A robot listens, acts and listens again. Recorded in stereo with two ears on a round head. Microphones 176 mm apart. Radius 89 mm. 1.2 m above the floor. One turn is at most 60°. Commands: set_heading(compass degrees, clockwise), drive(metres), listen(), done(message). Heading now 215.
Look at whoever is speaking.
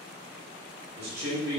set_heading(270)
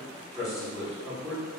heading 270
done("Found it: a man speaking, straight ahead, 1 to 2 m away.")